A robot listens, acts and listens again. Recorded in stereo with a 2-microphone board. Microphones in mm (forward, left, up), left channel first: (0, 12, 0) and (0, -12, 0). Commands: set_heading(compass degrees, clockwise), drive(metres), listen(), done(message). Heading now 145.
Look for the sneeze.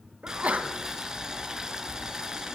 set_heading(235)
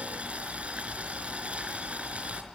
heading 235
done("Facing where the sneeze came from. I can't hear it now.")